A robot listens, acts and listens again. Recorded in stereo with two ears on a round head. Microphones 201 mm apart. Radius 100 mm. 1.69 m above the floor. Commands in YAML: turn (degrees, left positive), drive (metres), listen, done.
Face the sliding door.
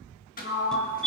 turn: 40
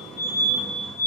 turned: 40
listen: true
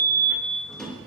done: "Facing the sliding door."